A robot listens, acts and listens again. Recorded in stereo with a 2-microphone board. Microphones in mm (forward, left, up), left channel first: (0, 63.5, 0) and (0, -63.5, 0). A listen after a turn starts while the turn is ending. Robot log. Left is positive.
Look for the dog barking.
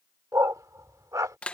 note: The dog barking: about 25° right or 155° right.
cmd yaw -25
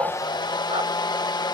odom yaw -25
cmd idle
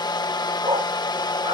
note: So it is at 125° right.
cmd yaw -125
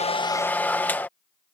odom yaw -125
cmd idle
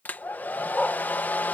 end: Found it: a dog barking, straight ahead.